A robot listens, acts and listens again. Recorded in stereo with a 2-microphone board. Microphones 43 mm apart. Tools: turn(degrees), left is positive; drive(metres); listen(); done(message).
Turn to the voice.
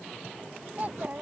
turn(degrees=-40)
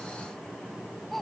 done("Facing the child speaking.")